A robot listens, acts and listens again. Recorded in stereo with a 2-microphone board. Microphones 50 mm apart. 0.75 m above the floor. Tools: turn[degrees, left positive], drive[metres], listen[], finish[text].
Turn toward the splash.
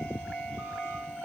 Action: listen[]
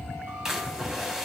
Action: turn[-30]
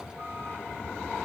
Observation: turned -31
Action: listen[]
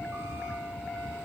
Action: finish[I heard a splash, but can't make it out now. It was about 20° left or 135° right.]